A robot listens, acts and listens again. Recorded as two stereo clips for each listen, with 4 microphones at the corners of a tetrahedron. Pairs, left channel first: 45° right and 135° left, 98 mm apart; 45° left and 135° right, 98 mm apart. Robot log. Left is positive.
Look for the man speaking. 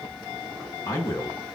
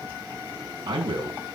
note: The man speaking: 100° right.
cmd yaw -100
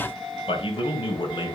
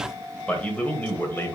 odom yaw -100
note: The man speaking is now 20° right.
cmd yaw -20
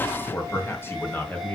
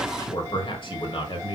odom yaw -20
note: The man speaking is now 30° left.
cmd yaw +30
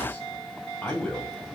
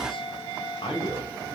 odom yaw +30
note: The man speaking is now 40° left.
cmd yaw +40
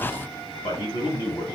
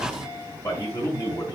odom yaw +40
end: Facing the man speaking, 2 to 4 m away.